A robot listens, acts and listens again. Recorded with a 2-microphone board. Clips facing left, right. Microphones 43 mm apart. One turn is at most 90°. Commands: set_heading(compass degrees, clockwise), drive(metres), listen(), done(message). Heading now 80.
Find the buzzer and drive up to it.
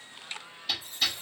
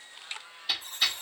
set_heading(125)
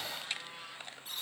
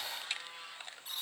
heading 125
drive(1.0)
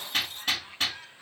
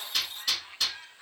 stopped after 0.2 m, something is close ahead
listen()
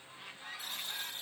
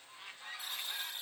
done("Something is in my way. I am facing the buzzer but have not reached it.")